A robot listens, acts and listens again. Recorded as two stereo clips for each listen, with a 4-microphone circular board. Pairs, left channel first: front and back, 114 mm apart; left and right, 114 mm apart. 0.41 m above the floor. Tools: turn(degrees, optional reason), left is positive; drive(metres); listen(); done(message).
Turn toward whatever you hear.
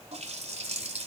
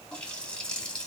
turn(degrees=170, reason="The running tap: 170° left.")
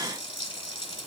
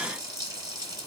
turn(degrees=-35, reason="The running tap is now 35° right.")
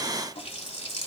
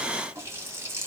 turn(degrees=-25, reason="The running tap is now 25° right.")
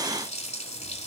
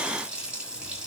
turn(degrees=-10, reason="The running tap is now 10° right.")
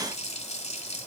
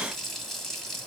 done("Found it: a running tap, straight ahead, 1 to 2 m away.")